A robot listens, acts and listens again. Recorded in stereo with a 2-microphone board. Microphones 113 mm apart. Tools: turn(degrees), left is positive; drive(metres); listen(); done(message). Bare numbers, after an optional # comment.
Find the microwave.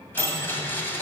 # The microwave: about 20° right or 160° right.
turn(-20)
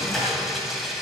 done("Found it: a microwave, straight ahead, 2 to 4 m away.")